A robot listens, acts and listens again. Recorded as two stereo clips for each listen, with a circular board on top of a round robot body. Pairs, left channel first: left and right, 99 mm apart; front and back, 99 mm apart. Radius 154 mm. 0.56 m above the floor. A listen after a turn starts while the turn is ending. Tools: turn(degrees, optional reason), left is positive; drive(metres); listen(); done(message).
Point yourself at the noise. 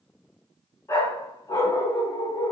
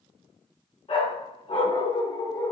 turn(degrees=45, reason="The dog barking: 45° left.")
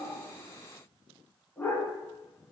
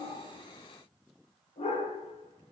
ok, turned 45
turn(degrees=20, reason="The dog barking is now 20° left.")
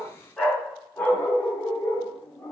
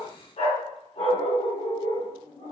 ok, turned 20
turn(degrees=25, reason="The dog barking is now 25° left.")
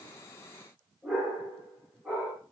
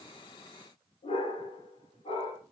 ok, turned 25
turn(degrees=-15, reason="The dog barking is now 15° right.")
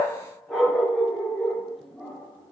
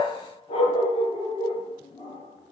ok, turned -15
done("Found it: a dog barking, straight ahead, 2 to 4 m away.")